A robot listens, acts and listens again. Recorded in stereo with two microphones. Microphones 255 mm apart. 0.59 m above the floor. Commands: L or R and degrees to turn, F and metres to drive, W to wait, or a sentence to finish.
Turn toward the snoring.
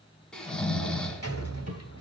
L30
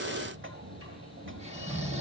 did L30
R25
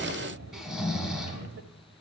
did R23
Facing the snoring, 1 to 2 m away.